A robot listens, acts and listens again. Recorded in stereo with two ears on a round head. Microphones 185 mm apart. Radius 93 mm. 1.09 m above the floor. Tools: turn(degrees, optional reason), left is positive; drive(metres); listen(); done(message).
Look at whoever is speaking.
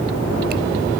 listen()
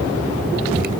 listen()
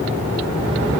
done("I can't make out anyone speaking.")